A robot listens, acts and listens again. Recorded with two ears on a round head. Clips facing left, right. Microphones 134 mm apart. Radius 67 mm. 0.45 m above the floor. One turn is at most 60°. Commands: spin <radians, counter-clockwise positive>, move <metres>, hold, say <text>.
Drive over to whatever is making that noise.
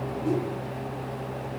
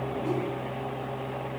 hold
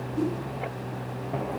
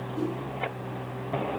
spin 0.52
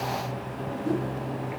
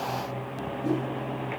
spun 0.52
spin -0.44
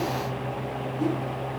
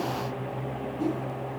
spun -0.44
spin -0.17
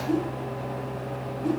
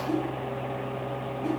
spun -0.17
move 1.0
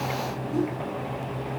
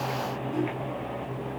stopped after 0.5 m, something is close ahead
say Something is in my way. I am facing the whoosh but have not reached it.